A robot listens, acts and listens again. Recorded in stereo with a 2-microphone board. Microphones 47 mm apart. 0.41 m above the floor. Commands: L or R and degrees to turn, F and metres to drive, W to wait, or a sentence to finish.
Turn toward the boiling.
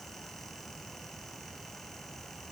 W
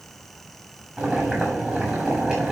R20
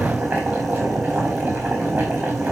R140
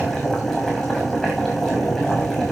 L10
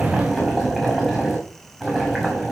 Found it: boiling, straight ahead, over 4 m away.